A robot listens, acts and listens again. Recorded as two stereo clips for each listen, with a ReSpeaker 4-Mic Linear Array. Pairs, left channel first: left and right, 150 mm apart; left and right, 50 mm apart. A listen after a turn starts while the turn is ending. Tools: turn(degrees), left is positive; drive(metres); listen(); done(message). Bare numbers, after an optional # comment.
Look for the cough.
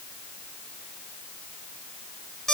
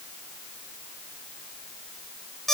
listen()
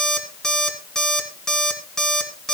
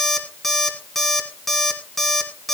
listen()
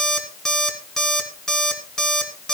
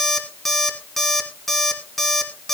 done("I can't make out a cough to turn to.")